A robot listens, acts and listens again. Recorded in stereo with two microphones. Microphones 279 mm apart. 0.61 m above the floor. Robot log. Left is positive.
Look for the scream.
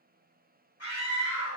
note: The scream: about 60° left or 120° left.
cmd yaw +60
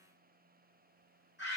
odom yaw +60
note: So it is at 45° left.
cmd yaw +45
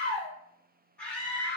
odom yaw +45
end: Facing the scream, 1 to 2 m away.